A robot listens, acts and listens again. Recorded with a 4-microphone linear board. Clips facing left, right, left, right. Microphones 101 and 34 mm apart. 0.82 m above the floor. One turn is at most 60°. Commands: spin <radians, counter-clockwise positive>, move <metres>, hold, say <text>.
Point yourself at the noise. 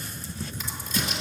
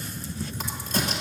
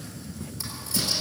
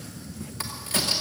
spin -1.05
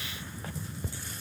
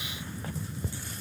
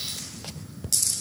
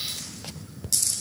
hold
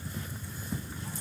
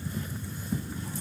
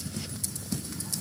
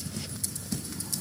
say I heard a crack, but can't make it out now. It was about straight ahead or 60° right.